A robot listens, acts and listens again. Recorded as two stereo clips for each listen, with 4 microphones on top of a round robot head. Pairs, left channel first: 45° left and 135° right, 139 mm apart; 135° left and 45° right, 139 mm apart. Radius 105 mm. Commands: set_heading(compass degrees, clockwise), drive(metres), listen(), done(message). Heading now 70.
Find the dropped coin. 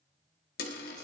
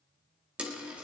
set_heading(30)
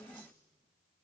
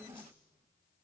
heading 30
done("I heard a dropped coin from this way, but can't make it out now.")